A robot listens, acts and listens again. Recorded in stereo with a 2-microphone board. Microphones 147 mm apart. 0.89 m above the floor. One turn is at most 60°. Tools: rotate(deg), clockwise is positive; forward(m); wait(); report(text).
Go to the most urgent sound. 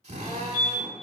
rotate(-55)
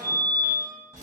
rotate(-25)
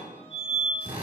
forward(1.0)
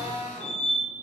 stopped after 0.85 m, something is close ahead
report("I am next to the fire alarm.")